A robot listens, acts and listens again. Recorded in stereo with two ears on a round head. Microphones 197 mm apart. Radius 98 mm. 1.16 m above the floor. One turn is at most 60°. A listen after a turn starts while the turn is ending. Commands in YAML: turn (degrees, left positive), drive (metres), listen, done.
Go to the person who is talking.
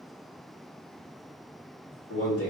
turn: 60
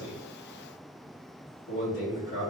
turn: 50
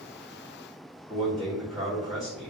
drive: 1.0
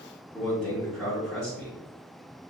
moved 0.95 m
drive: 1.0
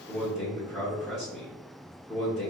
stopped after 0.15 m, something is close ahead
done: "I am next to the man speaking."